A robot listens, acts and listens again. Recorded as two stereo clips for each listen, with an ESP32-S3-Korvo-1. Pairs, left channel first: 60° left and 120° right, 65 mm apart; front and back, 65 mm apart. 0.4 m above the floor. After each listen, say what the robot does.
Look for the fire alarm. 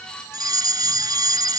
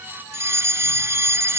Turn 135° right.
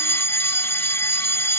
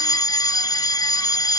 Turn 10° left.
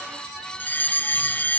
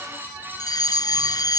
Found it: a fire alarm, straight ahead.